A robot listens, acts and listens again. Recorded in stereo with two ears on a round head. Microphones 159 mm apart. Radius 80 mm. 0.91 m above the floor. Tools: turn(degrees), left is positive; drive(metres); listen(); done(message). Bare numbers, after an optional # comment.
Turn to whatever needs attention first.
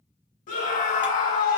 # The scream: about 45° left or 135° left.
turn(45)
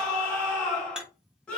done("Facing the scream, 1 to 2 m away.")